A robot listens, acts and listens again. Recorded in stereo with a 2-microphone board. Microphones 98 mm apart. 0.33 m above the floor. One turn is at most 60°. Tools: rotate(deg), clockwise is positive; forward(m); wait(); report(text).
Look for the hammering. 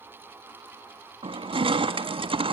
wait()
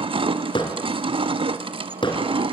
rotate(-60)
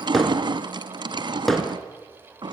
report("Facing the hammering, 2 to 4 m away.")